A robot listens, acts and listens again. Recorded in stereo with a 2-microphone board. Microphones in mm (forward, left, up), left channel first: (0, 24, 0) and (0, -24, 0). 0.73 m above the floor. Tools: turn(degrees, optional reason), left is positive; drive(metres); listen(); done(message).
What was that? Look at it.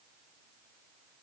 listen()
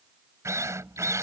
turn(degrees=-90)
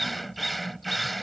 done("Facing the drill.")